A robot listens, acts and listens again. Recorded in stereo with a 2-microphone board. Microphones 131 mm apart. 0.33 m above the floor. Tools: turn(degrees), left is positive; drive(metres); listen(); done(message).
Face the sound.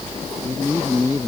turn(degrees=25)
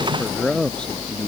done("Facing the man speaking.")